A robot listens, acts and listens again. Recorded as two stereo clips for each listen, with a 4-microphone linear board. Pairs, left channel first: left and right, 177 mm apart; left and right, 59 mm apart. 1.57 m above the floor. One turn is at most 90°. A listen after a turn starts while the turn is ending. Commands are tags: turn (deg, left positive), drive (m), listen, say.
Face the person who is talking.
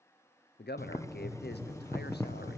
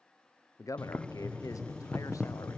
<turn deg="75"/>
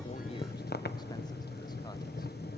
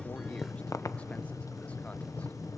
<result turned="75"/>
<listen/>
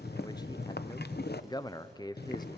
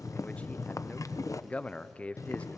<turn deg="25"/>
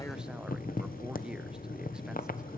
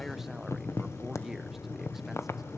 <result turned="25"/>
<listen/>
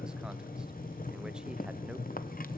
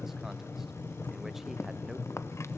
<listen/>
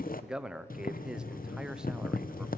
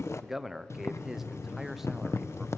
<say>Found it: a man speaking, straight ahead, under 1 m away.</say>